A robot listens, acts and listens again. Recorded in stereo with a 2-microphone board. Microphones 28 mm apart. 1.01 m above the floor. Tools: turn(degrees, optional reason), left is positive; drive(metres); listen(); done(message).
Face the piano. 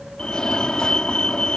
listen()
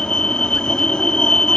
listen()
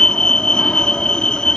done("I can't make out a piano, only a fire alarm.")